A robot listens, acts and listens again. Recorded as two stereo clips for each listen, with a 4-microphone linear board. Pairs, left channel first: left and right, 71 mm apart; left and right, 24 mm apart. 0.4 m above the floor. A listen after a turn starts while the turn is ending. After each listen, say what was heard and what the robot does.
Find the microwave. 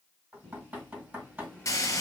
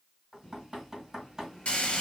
Turn 30° left.
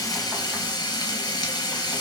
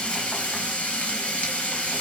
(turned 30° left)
Keep listening.
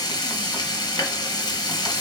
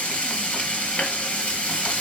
Keep listening.
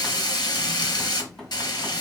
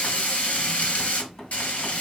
I heard a microwave, but can't make it out now. It was about 20° right or 140° left.